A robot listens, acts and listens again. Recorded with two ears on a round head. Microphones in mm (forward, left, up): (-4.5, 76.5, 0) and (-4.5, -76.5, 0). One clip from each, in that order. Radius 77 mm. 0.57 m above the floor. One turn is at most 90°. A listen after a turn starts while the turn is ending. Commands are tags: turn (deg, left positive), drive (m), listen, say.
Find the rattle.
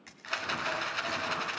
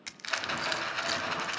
<turn deg="30"/>
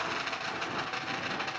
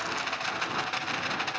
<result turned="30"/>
<turn deg="-25"/>
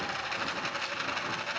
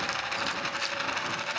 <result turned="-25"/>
<say>Facing the rattle.</say>